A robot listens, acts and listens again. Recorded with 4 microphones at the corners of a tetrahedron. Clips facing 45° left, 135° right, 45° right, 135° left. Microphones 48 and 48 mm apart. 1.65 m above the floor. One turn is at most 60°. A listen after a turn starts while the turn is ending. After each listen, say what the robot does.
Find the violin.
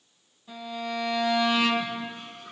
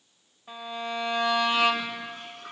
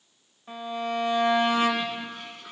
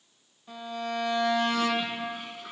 Turn 60° right.
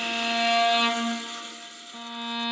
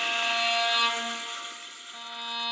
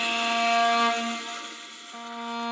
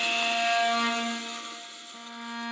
Turn 45° right.
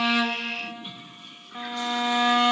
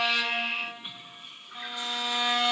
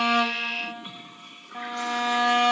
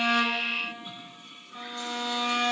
Turn 20° right.
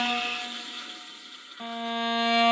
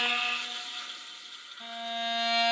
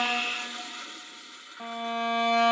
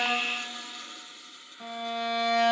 Found it: a violin, straight ahead.